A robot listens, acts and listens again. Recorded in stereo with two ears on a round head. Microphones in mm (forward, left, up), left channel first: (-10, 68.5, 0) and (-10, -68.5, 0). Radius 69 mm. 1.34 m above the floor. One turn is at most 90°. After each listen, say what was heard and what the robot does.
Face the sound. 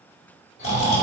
The snoring: about 45° left or 135° left. Turn 45° left.
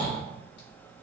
So it is at 85° left. Turn 85° left.
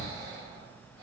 The snoring is now 25° right. Turn 25° right.
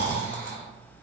The snoring is now 10° left. Turn 10° left.
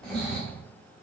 Facing the snoring, 1 to 2 m away.